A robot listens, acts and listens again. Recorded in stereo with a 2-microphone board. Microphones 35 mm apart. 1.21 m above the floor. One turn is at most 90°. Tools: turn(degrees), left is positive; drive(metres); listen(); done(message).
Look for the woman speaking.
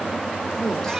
listen()
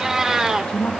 turn(degrees=25)
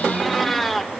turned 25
listen()
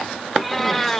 listen()
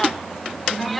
done("I heard a woman speaking, but can't make it out now. It was about straight ahead or 130° left.")